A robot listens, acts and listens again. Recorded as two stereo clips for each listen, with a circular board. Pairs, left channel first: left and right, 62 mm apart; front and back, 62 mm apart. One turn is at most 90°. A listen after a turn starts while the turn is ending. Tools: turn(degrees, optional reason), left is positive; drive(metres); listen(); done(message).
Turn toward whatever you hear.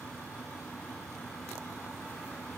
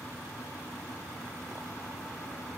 listen()
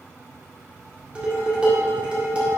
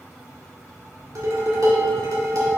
turn(degrees=-90, reason="The dishes clattering: 160° right.")
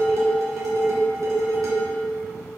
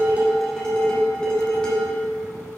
turn(degrees=-75, reason="The dishes clattering is now 75° right.")
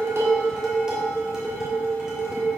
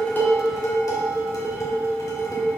turn(degrees=-10, reason="The dishes clattering is now 10° right.")
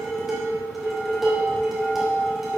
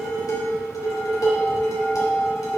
done("Facing the dishes clattering, 1 to 2 m away.")